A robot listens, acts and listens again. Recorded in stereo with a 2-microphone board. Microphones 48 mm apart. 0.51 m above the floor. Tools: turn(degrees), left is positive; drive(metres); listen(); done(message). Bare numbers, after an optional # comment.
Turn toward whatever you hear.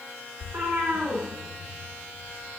# The cat meowing: about 70° right or 110° right.
turn(-70)
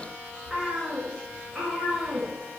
# So it is at 25° right.
turn(-25)
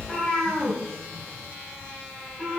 done("Found it: a cat meowing, straight ahead, over 4 m away.")